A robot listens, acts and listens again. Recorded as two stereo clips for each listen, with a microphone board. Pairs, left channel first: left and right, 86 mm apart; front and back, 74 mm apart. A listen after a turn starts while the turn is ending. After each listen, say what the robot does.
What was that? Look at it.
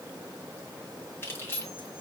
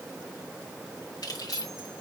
Turn 30° left.
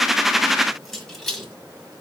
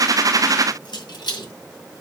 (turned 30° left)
Found it: keys jangling, straight ahead.